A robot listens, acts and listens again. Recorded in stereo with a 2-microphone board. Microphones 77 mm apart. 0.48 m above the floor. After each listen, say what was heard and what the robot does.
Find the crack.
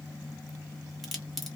Turn 30° left.
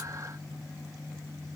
Keep listening.
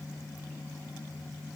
I heard a crack, but can't make it out now. It was about 25° right or 145° left.